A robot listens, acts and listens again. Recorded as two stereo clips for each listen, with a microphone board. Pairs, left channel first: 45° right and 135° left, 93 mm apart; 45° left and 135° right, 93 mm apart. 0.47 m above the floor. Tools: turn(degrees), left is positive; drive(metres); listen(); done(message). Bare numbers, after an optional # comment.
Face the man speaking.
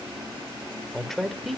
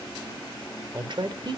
# The man speaking: 135° right.
turn(-135)
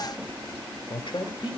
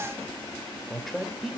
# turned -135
# The man speaking is now 45° right.
turn(-45)
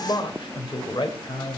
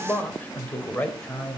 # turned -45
# The man speaking is now 30° right.
turn(-30)
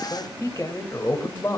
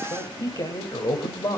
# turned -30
done("Found it: a man speaking, straight ahead.")